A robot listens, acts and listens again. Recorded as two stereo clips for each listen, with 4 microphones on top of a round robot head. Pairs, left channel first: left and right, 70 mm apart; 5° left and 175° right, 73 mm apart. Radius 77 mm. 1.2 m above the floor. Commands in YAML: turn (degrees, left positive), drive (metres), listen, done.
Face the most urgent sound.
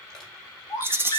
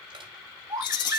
turn: 140
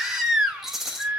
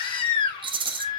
done: "Found it: a baby crying, straight ahead."